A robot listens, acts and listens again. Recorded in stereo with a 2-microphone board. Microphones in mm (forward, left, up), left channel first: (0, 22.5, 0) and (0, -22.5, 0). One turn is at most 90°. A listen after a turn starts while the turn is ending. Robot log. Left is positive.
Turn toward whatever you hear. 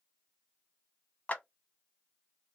note: The clap: about 40° left or 140° left.
cmd yaw +40
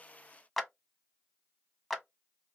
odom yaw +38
end: Facing the clap, under 1 m away.